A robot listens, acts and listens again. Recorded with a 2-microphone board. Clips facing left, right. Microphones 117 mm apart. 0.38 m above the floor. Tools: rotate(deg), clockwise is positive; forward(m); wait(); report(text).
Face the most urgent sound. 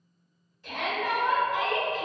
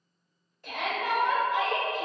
rotate(55)
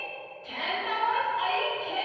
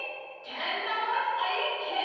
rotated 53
rotate(30)
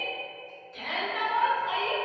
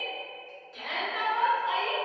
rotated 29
report("Found it: a shout, straight ahead.")